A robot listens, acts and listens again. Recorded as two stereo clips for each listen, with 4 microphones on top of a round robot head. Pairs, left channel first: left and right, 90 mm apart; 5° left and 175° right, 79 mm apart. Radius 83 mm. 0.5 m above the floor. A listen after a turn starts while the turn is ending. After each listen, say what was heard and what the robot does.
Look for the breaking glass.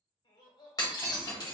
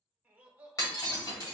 The breaking glass: 45° left. Turn 45° left.
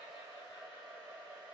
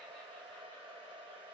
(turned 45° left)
I heard breaking glass from this way, but can't make it out now.